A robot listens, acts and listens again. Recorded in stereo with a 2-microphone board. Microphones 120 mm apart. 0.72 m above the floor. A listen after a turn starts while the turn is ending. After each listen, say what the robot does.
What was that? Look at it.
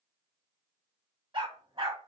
Turn 50° right.
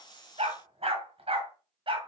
Turn 45° right.
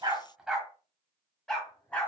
Turn 15° left.
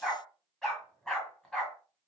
Found it: a dog barking, straight ahead, 1 to 2 m away.